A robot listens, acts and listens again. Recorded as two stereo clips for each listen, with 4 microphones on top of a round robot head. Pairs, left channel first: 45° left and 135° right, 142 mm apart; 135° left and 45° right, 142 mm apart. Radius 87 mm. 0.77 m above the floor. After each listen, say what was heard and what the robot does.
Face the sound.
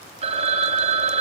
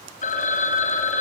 The phone ringing: 175° left. Turn 175° left.
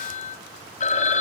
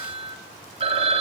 Found it: a phone ringing, straight ahead, 2 to 4 m away.